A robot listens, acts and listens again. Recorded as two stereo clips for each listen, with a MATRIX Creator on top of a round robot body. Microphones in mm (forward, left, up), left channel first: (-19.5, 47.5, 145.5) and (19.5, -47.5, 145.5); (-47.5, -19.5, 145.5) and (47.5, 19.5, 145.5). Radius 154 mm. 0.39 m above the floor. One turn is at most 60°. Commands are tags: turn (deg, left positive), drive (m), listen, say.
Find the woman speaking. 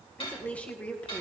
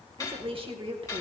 <turn deg="40"/>
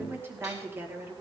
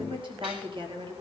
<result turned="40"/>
<say>Facing the woman speaking, 2 to 4 m away.</say>